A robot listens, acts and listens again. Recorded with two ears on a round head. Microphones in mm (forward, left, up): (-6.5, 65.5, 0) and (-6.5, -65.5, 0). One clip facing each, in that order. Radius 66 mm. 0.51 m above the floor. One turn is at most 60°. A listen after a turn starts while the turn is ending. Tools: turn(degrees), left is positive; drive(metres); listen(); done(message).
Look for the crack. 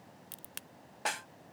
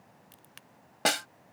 turn(degrees=60)
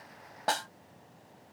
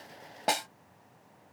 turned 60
listen()
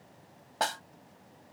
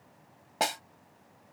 done("I heard a crack, but can't make it out now. It was about straight ahead or 60° left.")